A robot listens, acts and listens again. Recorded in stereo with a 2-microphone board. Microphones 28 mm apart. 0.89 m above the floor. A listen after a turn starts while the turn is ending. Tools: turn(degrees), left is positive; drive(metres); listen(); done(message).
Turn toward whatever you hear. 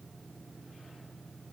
listen()
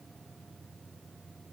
listen()
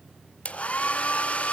turn(degrees=55)
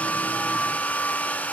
turn(degrees=65)
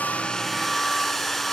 done("Facing the hair dryer.")